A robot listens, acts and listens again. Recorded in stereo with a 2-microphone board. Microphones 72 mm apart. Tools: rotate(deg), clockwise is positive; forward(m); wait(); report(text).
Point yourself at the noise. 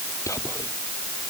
rotate(-45)
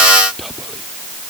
report("Found it: whispering, straight ahead.")